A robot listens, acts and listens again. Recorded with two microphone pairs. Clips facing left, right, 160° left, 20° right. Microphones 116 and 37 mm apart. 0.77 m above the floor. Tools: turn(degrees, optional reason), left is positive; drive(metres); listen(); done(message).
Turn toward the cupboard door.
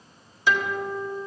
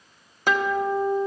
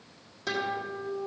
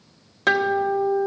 listen()
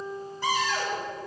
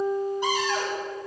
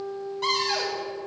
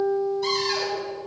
turn(degrees=-165, reason="The cupboard door: 165° right.")
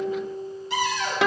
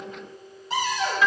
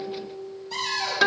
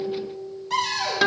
turn(degrees=-40, reason="The cupboard door is now 40° right.")
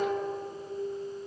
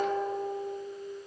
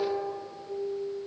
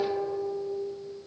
listen()
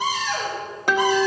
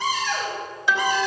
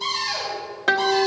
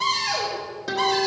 turn(degrees=15, reason="The cupboard door is now 15° left.")
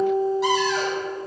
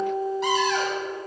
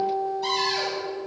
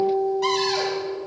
listen()
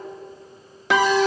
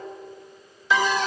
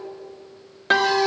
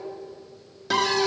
listen()
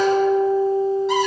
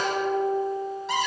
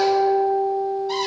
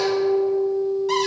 done("I heard a cupboard door from this way, but can't make it out now.")